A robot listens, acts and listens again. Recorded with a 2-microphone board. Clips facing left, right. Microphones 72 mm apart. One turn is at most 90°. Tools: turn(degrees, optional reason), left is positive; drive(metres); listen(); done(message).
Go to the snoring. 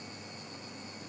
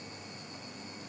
listen()
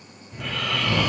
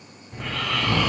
turn(degrees=-35, reason="The snoring: about 35° right or 145° right.")
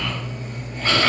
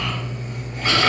turn(degrees=-10, reason="So it is at 10° right.")
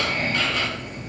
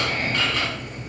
drive(metres=1.0)
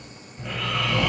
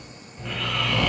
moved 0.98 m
turn(degrees=10, reason="The snoring is now 10° left.")
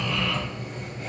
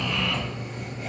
drive(metres=1.0)
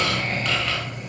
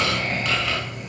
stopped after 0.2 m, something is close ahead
done("Arrived at the snoring, straight ahead.")